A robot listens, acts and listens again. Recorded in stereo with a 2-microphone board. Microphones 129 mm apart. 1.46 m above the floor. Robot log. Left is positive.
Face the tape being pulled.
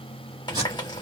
note: The tape being pulled: about 35° right or 145° right.
cmd yaw -35
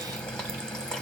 cmd idle
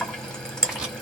end: Facing the tape being pulled, 2 to 4 m away.